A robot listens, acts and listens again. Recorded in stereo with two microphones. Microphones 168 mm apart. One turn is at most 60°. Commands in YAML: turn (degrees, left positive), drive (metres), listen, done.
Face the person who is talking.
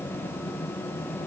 listen: true
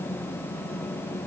listen: true
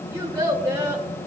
turn: -15
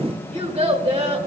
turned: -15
turn: -60
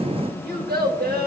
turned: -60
turn: -60
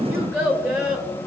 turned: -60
turn: -15
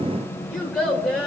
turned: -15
done: "Facing the child speaking."